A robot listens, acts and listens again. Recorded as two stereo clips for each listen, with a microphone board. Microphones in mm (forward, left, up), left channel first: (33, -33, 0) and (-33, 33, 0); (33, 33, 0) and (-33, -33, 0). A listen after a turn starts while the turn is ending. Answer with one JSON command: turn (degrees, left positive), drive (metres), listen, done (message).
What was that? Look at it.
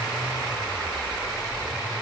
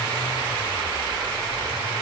{"listen": true}
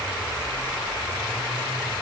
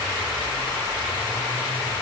{"listen": true}
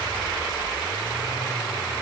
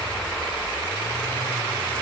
{"done": "I can't make out anything."}